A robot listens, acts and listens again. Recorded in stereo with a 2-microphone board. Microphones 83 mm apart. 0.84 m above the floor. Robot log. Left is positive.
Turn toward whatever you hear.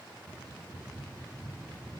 cmd idle
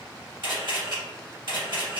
note: The camera shutter: about 65° right or 115° right.
cmd yaw -65
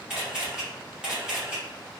note: So it is at 10° right.
cmd yaw -10
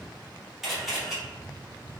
end: Found it: a camera shutter, straight ahead, 1 to 2 m away.